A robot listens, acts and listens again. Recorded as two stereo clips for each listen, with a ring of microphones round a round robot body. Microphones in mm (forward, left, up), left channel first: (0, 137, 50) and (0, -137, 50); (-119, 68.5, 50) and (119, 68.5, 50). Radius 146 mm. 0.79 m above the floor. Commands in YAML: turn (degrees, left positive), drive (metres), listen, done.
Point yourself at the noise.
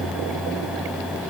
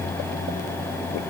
listen: true
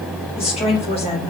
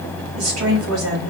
turn: 20
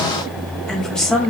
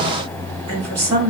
done: "Facing the woman speaking, 2 to 4 m away."